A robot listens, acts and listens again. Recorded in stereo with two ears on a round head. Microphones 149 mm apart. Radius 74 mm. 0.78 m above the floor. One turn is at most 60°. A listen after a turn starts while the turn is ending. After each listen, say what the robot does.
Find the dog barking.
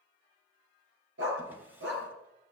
Turn 60° right.
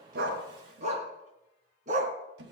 Turn 45° right.
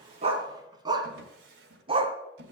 Turn 35° right.
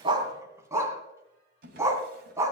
Turn 15° right.
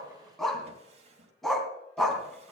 Found it: a dog barking, straight ahead.